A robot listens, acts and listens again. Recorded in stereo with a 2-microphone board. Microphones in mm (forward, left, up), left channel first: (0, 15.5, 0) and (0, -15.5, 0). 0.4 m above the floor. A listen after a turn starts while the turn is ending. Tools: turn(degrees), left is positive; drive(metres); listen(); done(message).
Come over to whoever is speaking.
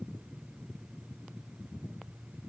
listen()
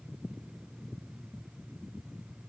listen()
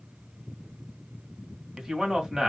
turn(degrees=-20)
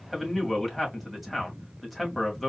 drive(metres=1.0)
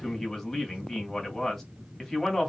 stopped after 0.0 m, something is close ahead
turn(degrees=10)
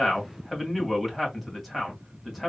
done("Blocked. The man speaking is further on, straight ahead.")